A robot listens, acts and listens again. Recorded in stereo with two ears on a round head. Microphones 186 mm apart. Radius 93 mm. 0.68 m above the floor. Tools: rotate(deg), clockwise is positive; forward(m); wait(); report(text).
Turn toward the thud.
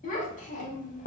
wait()
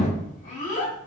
wait()
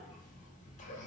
report("I can't make out a thud to turn to.")